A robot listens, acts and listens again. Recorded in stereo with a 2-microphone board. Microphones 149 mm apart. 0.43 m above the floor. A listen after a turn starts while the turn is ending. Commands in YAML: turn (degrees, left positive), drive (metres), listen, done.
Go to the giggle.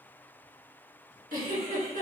turn: -90
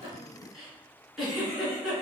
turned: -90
drive: 1.0
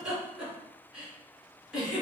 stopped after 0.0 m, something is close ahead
done: "Something is in my way. I am facing the giggle but have not reached it."